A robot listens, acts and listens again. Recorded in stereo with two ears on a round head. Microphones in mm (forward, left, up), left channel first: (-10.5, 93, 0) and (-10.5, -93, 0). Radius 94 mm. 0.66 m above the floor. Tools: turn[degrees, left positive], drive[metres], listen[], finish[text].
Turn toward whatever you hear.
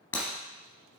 Action: turn[30]
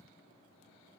Action: listen[]
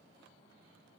Action: finish[I heard breaking glass, but can't make it out now. It was about 20° right or 140° left.]